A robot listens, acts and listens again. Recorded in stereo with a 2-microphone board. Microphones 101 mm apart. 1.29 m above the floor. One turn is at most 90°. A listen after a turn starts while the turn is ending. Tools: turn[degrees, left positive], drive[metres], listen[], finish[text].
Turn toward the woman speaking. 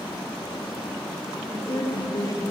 Thought: The woman speaking: about 40° left or 140° left.
Action: turn[40]
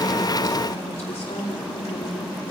Thought: So it is at 95° left.
Action: turn[90]
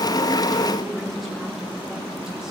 Action: finish[Found it: a woman speaking, straight ahead, 2 to 4 m away.]